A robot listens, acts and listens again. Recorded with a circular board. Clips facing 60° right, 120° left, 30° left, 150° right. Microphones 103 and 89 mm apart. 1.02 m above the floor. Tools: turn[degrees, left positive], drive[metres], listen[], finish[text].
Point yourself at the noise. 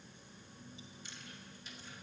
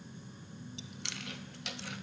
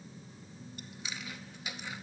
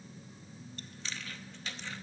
Thought: The chewing: 105° left.
Action: turn[105]
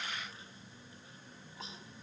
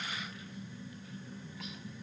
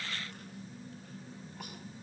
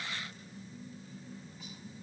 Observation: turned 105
Action: listen[]
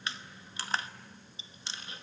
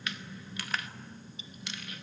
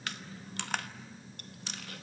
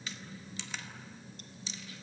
Action: finish[Facing the chewing, under 1 m away.]